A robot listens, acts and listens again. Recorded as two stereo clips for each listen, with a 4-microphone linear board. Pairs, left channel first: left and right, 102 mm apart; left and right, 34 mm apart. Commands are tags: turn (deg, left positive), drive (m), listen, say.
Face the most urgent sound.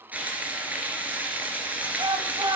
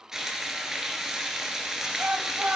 <turn deg="-50"/>
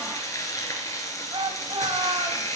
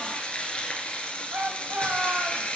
<turn deg="-75"/>
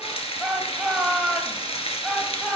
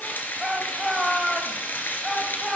<say>Facing the shout.</say>